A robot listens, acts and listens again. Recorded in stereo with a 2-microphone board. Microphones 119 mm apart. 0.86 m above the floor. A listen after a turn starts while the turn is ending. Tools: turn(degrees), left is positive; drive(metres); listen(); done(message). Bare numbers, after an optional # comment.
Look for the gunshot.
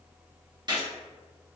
# The gunshot: about 35° right or 145° right.
turn(-35)
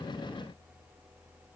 listen()
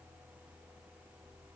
done("I heard a gunshot, but can't make it out now. It was about straight ahead or 110° right.")